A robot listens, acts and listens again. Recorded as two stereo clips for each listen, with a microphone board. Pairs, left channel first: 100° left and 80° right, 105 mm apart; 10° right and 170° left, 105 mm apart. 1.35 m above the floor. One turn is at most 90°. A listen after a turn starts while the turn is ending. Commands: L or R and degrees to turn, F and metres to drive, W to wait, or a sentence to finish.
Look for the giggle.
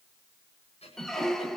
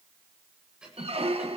L85
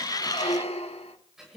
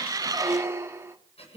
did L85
Facing the giggle.